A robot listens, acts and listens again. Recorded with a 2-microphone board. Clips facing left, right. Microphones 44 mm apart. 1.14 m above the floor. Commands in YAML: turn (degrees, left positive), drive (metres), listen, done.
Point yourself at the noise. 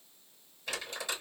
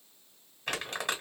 turn: -60
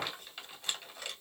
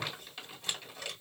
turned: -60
done: "Facing the crumpling."